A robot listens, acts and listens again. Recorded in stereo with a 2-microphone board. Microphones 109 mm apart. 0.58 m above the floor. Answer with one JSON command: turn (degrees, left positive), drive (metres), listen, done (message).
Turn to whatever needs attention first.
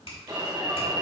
{"turn": -40}
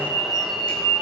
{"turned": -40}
{"done": "Found it: an alarm, straight ahead, 1 to 2 m away."}